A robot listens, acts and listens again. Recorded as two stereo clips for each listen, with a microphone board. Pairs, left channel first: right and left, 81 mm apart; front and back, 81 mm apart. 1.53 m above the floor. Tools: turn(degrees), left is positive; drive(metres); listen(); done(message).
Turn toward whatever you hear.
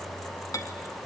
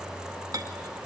turn(degrees=-135)
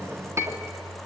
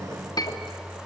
turn(degrees=35)
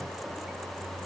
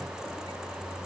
listen()
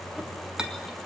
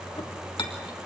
turn(degrees=10)
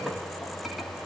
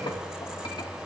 listen()
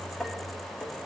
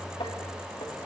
done("Found it: a clink, straight ahead, 2 to 4 m away.")